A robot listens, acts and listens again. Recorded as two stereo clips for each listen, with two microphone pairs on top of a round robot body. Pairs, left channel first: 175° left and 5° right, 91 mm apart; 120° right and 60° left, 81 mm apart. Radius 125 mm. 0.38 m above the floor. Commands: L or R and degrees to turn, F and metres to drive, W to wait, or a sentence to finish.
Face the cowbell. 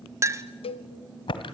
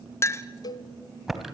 R165
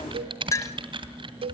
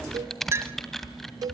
L15
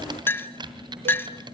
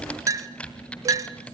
W
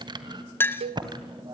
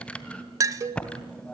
Found it: a cowbell, straight ahead, under 1 m away.